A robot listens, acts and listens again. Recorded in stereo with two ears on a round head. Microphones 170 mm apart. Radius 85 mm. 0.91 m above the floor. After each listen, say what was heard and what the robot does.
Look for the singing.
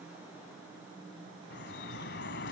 Keep listening.
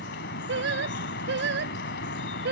The singing: about 60° right or 120° right. Turn 60° right.
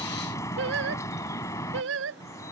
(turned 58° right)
So it is at 70° right. Turn 70° right.
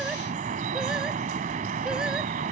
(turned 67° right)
Keep listening.
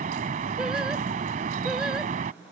Keep listening.
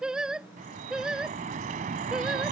Facing the singing.